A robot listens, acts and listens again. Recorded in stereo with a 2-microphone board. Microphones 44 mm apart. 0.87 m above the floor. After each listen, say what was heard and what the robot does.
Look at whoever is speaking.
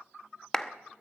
Keep listening.
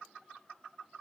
Keep listening.
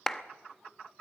I can't make out anyone speaking to turn to.